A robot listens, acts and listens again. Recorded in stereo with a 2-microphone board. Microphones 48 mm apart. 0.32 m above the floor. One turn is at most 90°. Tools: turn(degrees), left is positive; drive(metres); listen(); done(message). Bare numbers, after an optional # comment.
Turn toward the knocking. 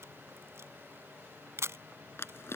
listen()
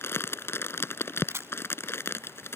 listen()
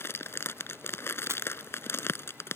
done("I can't make out knocking, only a camera shutter and crumpling.")